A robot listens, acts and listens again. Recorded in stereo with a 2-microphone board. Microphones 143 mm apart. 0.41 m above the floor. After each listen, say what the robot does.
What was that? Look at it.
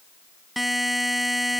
Turn 30° left.
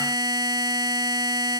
Turn 30° right.
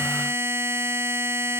Turn 15° right.
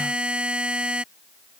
Found it: a buzzer, straight ahead.